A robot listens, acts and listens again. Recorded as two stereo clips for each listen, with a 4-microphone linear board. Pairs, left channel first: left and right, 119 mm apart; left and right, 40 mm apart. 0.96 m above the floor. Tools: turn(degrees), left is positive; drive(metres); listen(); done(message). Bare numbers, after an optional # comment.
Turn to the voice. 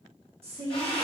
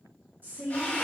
# The woman speaking: about 55° right or 125° right.
turn(-55)
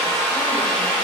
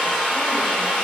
listen()
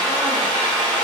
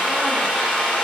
listen()
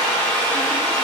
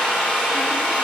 done("I heard a woman speaking, but can't make it out now. It was about straight ahead or 70° right.")